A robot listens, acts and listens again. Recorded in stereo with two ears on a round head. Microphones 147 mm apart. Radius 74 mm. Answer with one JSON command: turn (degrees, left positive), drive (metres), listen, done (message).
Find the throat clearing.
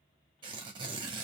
{"listen": true}
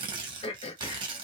{"turn": 40}
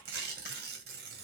{"listen": true}
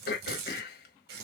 {"turn": 100}
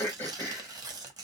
{"turn": 15}
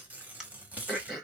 {"done": "Facing the throat clearing, 1 to 2 m away."}